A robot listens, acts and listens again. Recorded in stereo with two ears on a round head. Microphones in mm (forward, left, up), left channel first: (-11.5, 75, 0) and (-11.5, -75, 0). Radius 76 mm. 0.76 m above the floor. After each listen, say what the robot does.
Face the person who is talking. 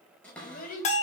Turn 60° left.
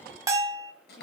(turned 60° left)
Keep listening.
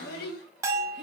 Turn 60° left.
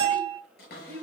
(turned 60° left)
Turn 10° left.
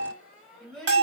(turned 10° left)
Facing the child speaking, 2 to 4 m away.